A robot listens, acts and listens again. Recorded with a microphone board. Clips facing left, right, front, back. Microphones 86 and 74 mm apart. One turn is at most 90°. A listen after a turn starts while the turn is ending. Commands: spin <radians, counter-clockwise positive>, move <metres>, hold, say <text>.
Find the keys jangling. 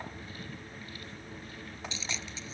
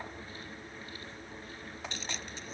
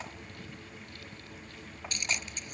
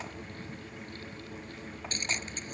spin -1.57
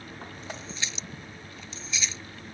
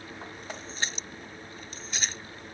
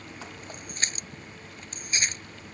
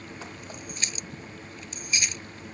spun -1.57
spin -0.87
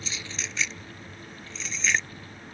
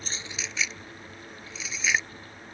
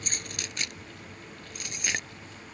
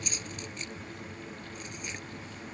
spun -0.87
say Facing the keys jangling.